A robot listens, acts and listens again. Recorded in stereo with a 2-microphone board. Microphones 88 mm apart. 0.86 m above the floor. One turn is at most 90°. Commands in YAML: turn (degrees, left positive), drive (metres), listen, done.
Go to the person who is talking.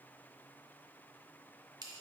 listen: true
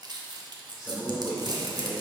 turn: 30
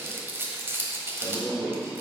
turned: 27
turn: -25
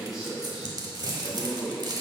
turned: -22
drive: 1.0
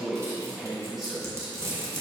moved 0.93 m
drive: 1.0
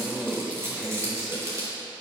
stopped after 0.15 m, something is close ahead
done: "Arrived at the man speaking, straight ahead."